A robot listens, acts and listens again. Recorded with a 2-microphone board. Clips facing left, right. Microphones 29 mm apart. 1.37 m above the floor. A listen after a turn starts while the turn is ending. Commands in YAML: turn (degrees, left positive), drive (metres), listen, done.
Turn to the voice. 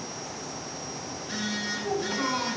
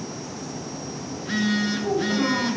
turn: -25
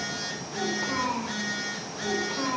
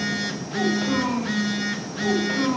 turn: -130
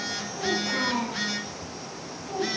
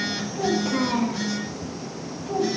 turn: -10
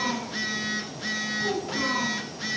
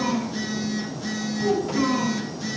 done: "Facing the child speaking, over 4 m away."